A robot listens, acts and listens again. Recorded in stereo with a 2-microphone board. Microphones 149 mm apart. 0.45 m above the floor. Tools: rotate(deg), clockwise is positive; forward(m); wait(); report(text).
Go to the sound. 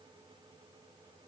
wait()
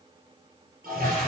rotate(90)
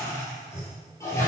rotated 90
rotate(-20)
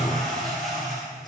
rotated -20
forward(1.0)
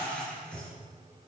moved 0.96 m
forward(1.0)
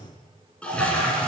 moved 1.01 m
rotate(-10)
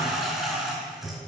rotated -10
forward(1.0)
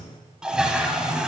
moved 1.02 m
forward(1.0)
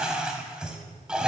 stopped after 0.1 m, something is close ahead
report("I am next to the toilet flushing.")